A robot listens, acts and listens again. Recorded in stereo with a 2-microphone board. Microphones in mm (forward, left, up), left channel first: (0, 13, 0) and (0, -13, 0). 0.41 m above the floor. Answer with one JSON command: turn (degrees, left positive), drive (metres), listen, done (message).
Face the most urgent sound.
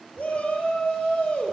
{"turn": 60}
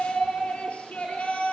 {"turn": 60}
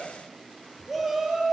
{"turn": -10}
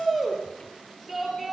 {"done": "Facing the shout, over 4 m away."}